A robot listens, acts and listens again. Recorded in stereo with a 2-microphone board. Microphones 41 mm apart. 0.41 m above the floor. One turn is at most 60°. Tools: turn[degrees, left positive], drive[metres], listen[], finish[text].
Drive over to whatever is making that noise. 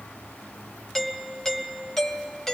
Action: turn[30]
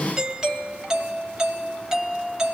Thought: So it is at 15° right.
Action: turn[-15]
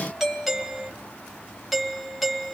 Action: drive[1.0]
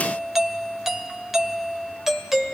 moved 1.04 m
Thought: The doorbell is now 10° right.
Action: turn[-10]
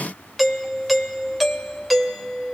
Action: drive[1.0]
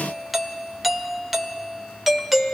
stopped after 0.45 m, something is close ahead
Action: finish[Arrived at the doorbell, straight ahead.]